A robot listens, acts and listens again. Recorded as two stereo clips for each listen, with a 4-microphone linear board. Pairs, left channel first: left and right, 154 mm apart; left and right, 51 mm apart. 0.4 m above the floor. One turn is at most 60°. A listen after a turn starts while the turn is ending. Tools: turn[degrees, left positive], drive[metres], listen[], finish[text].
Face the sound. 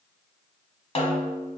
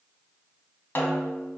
Thought: The snare drum: about 45° left or 135° left.
Action: turn[45]
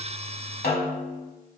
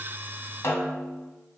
Thought: So it is at 90° left.
Action: turn[60]
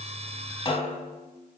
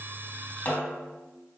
Thought: The snare drum is now 35° left.
Action: turn[35]
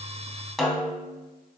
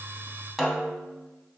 Action: finish[Facing the snare drum.]